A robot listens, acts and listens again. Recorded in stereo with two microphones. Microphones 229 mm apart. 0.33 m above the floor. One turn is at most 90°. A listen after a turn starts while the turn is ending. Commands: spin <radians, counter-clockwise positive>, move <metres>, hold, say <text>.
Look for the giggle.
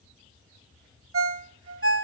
hold
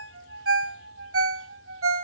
hold
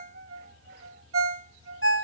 say I can't make out a giggle, only a ringtone.